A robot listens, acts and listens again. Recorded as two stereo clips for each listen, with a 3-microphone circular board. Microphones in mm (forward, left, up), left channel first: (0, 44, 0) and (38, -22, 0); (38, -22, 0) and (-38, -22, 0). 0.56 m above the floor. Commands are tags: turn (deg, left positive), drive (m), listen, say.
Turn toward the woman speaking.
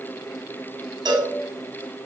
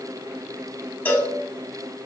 <listen/>
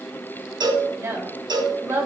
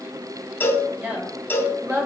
<turn deg="-120"/>
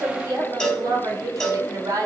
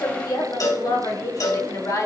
<turn deg="-35"/>
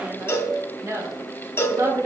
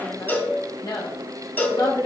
<turn deg="-20"/>
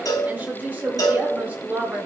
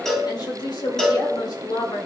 <say>Found it: a woman speaking, straight ahead, 1 to 2 m away.</say>